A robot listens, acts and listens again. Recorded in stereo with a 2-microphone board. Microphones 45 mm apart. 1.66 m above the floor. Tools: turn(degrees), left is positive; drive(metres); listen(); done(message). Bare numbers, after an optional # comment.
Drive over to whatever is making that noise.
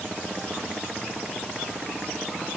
listen()
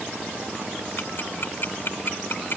# The ticking: about 50° left or 130° left.
turn(50)
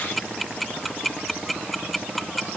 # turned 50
drive(1.0)
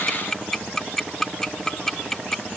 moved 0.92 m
# The ticking is now 10° left.
turn(10)
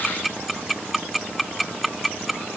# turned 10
drive(1.0)
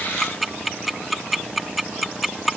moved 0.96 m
drive(1.0)
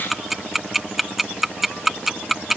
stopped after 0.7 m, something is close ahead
# The ticking is now 10° right.
turn(-10)
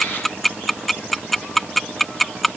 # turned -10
done("I am next to the ticking.")